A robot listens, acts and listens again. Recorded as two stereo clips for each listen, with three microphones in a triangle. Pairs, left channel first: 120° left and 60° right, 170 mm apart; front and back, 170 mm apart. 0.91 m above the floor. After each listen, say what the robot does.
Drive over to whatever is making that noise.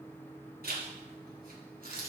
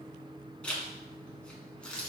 Turn 85° right.
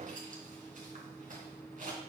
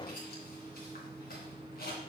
Turn 20° right.
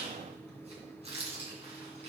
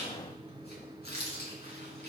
Turn 10° right.
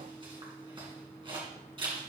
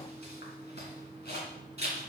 Drive 1.0 m forward.
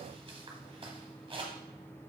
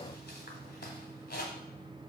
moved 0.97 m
Drive 1.0 m forward.
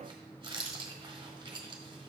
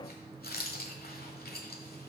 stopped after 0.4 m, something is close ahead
I am next to the zipper.